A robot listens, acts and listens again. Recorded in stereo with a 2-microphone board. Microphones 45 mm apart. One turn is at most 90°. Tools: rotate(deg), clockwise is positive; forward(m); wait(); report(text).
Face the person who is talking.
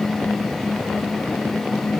wait()
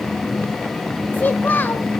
rotate(-40)
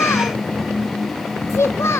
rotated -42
rotate(-90)
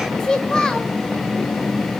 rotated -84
rotate(-15)
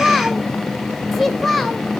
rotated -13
report("Facing the child speaking.")